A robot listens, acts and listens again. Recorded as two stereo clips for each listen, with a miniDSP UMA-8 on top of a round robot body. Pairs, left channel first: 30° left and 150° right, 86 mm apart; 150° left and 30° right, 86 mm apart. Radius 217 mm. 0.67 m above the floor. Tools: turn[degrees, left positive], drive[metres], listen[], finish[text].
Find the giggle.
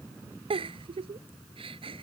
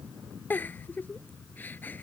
Thought: The giggle: 140° right.
Action: turn[-140]
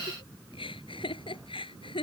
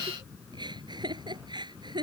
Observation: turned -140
Thought: The giggle is now 10° left.
Action: turn[10]
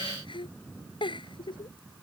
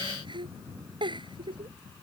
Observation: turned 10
Action: finish[Facing the giggle.]